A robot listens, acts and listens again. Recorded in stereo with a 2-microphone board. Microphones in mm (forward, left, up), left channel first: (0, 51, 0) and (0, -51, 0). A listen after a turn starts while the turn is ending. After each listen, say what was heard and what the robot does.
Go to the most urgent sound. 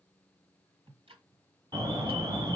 The alarm: about 40° right or 140° right. Turn 40° right.
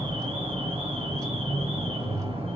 So it is at 95° right. Turn 95° right.
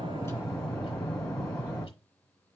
Drive 1.0 m forward.
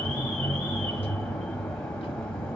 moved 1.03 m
The alarm is now 10° left. Turn 10° left.
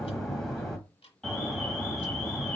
Drive 1.0 m forward.
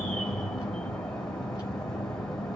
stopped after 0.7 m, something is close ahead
The alarm is now 10° left. Turn 10° left.
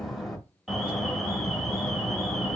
I am next to the alarm.